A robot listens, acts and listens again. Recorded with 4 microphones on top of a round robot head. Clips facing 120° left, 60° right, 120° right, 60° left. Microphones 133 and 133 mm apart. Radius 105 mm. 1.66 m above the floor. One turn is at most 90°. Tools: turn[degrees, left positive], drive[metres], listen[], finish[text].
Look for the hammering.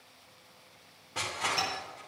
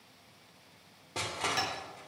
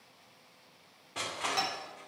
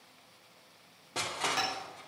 Thought: The hammering: 30° right.
Action: turn[-30]
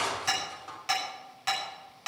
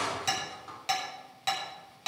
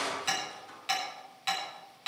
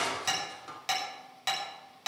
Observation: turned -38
Thought: The hammering is now 10° left.
Action: turn[10]
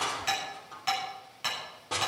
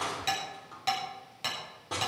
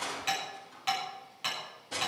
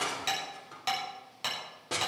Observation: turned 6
Action: finish[Found it: hammering, straight ahead, over 4 m away.]